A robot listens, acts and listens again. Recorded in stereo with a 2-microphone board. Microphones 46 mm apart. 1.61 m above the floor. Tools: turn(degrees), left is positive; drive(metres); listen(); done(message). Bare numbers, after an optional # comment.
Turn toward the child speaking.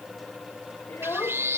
# The child speaking: about 70° left or 110° left.
turn(70)
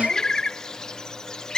listen()
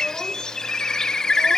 listen()
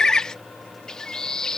done("I heard a child speaking, but can't make it out now. It was about straight ahead or 40° left.")